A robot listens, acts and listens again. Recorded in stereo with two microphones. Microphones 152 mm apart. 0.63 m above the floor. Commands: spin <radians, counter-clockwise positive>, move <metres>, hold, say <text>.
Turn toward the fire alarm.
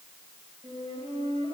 hold
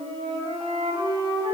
hold
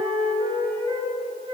say I can't make out a fire alarm to turn to.